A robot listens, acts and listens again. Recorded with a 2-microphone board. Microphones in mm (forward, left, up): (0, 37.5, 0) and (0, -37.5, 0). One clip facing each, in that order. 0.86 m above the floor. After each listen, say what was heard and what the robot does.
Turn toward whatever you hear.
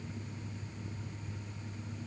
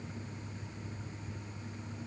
Keep listening.
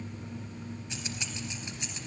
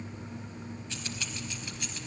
The keys jangling: about 20° left or 160° left. Turn 20° left.
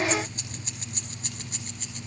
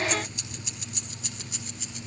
So it is at 135° left. Turn 135° left.
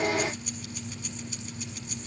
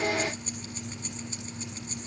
Keep listening.
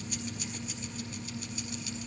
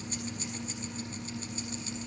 Keep listening.
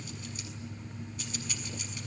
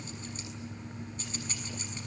The keys jangling is now 30° right. Turn 30° right.
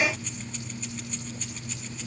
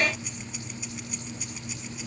The keys jangling is now 10° right. Turn 10° right.
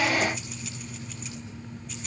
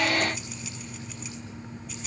Found it: keys jangling, straight ahead, over 4 m away.